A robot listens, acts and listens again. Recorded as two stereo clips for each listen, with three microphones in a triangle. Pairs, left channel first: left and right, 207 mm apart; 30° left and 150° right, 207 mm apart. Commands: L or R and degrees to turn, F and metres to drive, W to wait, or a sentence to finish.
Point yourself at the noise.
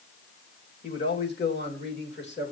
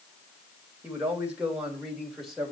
L120
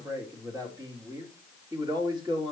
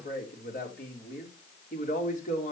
R20
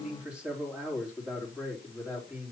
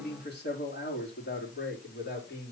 Found it: a man speaking, straight ahead, 2 to 4 m away.